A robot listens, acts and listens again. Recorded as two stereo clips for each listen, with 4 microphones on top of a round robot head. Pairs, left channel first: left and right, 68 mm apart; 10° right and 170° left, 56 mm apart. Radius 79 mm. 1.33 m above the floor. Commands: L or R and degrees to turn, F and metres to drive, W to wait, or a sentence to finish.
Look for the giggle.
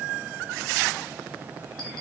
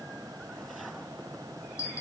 W
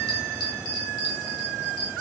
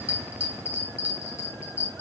W
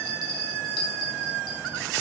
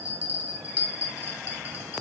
I can't make out a giggle, only a bell.